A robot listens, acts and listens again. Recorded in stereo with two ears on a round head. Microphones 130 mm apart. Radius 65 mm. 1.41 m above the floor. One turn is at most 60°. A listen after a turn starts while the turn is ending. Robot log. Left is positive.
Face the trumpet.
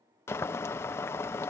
cmd idle
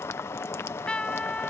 cmd yaw +30
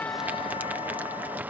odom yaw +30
cmd idle
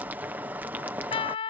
note: So it is at 145° left.
cmd yaw +60
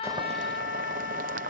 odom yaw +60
note: Nothing new. It was at 85° left.
cmd yaw +60
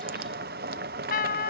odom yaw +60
note: The trumpet is now 65° left.
cmd yaw +60
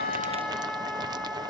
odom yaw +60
end: Found it: a trumpet, straight ahead.